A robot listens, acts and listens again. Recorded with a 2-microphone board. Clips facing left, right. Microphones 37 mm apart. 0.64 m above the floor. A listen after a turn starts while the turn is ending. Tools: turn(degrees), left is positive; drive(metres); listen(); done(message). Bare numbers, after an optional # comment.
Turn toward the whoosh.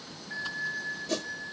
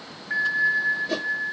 # The whoosh: about 20° right or 160° right.
turn(-20)
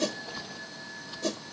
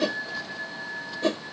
# So it is at 140° right.
turn(-140)
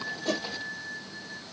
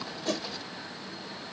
listen()
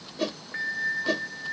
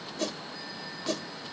# The whoosh is now 20° left.
turn(20)
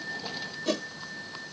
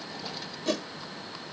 done("Found it: a whoosh, straight ahead.")